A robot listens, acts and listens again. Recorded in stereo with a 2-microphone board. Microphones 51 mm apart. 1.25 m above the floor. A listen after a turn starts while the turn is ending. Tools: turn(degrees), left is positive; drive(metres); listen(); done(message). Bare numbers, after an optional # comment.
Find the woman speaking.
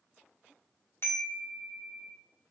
listen()
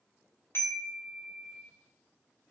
listen()
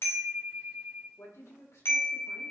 turn(90)
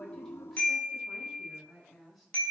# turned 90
done("Found it: a woman speaking, straight ahead, 2 to 4 m away.")